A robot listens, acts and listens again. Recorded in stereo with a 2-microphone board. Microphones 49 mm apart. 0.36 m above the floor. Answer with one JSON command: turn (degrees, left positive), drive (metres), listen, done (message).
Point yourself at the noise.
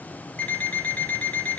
{"turn": 25}
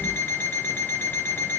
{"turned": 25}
{"turn": 125}
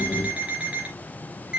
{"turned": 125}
{"turn": -25}
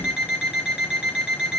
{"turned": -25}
{"turn": -15}
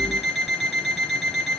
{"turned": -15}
{"done": "Facing the alarm clock, 2 to 4 m away."}